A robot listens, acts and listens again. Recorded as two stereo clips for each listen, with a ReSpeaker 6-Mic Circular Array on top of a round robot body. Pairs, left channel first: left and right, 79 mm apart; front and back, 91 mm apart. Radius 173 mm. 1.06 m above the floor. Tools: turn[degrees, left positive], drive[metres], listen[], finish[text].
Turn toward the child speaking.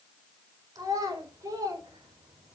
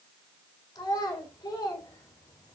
Thought: The child speaking: 50° right.
Action: turn[-50]
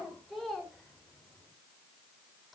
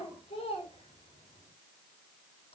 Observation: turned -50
Action: finish[Found it: a child speaking, straight ahead, over 4 m away.]